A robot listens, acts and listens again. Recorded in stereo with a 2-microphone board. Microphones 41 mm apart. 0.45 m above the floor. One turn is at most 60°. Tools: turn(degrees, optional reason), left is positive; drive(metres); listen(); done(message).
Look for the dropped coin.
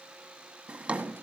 listen()
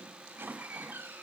listen()
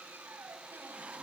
done("I can't make out a dropped coin to turn to.")